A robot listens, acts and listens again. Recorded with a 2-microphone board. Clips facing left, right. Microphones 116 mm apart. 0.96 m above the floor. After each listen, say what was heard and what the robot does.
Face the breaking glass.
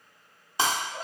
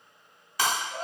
The breaking glass: about 25° left or 155° left. Turn 25° left.
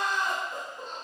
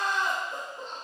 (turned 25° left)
Keep listening.
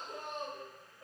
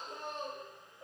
I heard breaking glass, but can't make it out now. It was about straight ahead or 130° left.